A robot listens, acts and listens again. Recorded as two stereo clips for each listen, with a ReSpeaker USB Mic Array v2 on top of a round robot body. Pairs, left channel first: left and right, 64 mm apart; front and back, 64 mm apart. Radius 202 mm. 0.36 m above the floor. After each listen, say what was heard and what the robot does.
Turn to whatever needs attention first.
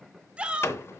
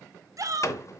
The shout: 160° right. Turn 160° right.
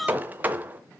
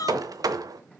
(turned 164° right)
Found it: a shout, straight ahead, 1 to 2 m away.